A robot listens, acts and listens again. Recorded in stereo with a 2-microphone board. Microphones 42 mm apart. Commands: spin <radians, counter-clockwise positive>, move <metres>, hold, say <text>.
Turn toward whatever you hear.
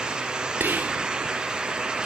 spin -0.96
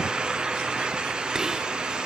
hold
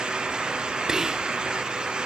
spin -0.26
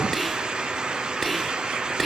say Found it: whispering, straight ahead.